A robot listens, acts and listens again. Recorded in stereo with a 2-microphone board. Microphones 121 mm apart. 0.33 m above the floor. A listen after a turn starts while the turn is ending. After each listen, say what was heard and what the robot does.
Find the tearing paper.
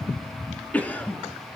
Keep listening.
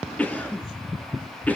Keep listening.
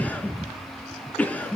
I can't make out tearing paper, only a cough.